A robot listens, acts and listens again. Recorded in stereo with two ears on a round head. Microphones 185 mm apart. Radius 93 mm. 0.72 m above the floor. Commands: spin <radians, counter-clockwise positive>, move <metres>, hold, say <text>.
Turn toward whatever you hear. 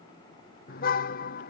spin 0.79
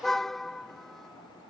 say Facing the car horn.